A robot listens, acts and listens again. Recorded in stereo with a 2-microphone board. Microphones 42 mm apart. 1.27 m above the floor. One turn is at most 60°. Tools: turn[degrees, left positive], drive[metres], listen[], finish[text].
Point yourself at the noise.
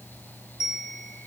Thought: The bell: about 20° right or 160° right.
Action: turn[-20]
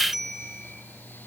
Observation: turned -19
Action: finish[Found it: a bell, straight ahead.]